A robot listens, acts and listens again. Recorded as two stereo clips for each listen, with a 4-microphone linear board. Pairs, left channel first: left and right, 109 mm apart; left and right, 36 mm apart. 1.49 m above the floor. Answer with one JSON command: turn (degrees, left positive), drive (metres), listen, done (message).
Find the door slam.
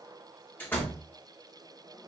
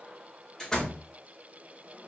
{"turn": 20}
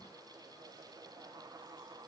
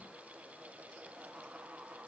{"listen": true}
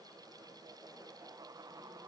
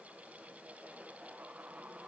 {"done": "I heard a door slam, but can't make it out now. It was about straight ahead or 140° left."}